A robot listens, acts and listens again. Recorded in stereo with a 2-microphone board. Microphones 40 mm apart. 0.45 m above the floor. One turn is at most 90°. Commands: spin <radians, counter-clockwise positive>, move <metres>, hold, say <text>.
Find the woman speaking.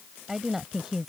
spin -0.52
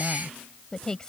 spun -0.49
spin 0.35
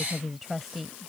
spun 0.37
say Facing the woman speaking.